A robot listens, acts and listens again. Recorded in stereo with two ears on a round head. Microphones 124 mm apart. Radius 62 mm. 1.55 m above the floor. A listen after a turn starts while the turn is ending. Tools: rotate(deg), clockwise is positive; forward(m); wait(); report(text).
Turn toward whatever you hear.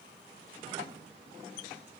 wait()
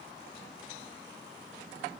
wait()
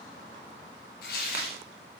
rotate(-70)
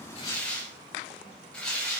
rotate(-10)
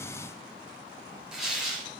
report("Found it: tearing paper, straight ahead.")